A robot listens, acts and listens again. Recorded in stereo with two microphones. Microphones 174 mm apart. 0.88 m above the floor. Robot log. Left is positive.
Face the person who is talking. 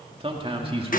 note: The man speaking: about 30° right or 150° right.
cmd yaw -30
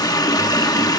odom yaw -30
cmd idle
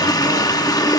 cmd idle
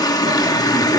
end: I heard a man speaking, but can't make it out now. It was about straight ahead or 120° right.